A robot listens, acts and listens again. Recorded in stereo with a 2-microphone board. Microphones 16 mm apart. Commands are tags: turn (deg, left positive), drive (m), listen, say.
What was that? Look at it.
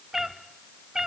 <turn deg="-40"/>
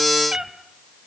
<turn deg="-110"/>
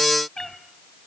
<turn deg="40"/>
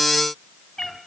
<turn deg="35"/>
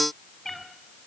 <turn deg="25"/>
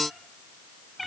<say>Facing the cat meowing, 2 to 4 m away.</say>